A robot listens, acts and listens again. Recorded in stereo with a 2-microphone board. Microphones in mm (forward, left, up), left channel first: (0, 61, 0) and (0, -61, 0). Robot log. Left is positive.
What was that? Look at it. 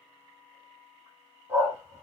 note: The dog barking: about 20° right or 160° right.
cmd yaw -20
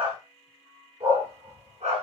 note: So it is at 120° right.
cmd yaw -120
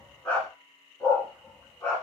note: The dog barking is now 15° left.
cmd yaw +15
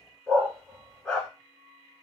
end: Found it: a dog barking, straight ahead, 2 to 4 m away.